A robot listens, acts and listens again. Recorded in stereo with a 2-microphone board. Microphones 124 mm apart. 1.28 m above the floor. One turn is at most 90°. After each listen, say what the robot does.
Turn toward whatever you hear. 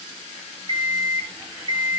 Turn 45° right.
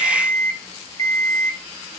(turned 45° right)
Turn 85° right.
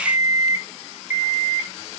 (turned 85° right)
Turn 20° right.
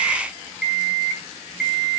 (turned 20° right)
Facing the alarm clock, 2 to 4 m away.